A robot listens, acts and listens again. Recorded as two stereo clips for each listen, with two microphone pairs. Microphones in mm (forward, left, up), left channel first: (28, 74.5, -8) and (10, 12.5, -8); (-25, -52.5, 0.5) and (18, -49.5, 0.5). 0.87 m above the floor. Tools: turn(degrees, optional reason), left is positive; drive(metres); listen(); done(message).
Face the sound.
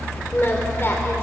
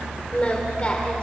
turn(degrees=125, reason="The singing: 125° left.")
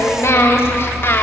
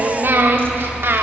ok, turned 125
turn(degrees=25, reason="The singing is now 25° left.")
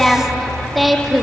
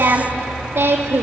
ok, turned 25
turn(degrees=-20, reason="The singing is now 20° right.")
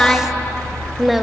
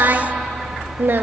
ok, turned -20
turn(degrees=-20, reason="The singing is now 20° right.")
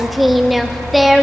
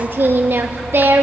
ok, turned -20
turn(degrees=-15, reason="The singing is now 15° right.")
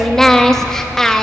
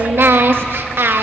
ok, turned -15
done("Facing the singing.")